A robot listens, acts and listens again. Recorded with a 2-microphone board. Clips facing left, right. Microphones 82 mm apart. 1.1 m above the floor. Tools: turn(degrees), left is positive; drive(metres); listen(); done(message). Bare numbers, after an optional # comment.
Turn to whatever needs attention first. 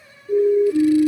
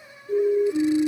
turn(30)
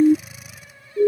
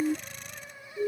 # So it is at 140° left.
turn(140)
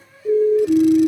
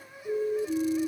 # The siren is now 45° left.
turn(45)
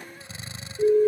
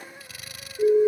done("Facing the siren.")